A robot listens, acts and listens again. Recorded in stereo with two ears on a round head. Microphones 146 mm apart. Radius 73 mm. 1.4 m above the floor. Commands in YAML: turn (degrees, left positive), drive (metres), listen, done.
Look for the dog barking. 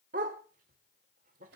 turn: -55
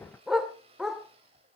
done: "Found it: a dog barking, straight ahead, 2 to 4 m away."